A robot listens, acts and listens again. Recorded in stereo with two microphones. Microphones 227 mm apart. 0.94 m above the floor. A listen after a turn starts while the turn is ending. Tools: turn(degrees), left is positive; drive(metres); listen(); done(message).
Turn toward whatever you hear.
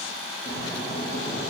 turn(degrees=50)
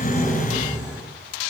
done("Facing the snoring.")